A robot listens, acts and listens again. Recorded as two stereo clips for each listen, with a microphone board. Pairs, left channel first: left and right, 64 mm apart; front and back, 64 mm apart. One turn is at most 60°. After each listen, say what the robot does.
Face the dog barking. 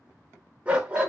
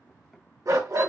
Turn 60° right.
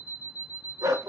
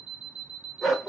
Turn 60° right.
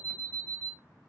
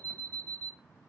Turn 30° right.
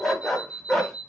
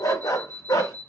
Found it: a dog barking, straight ahead, under 1 m away.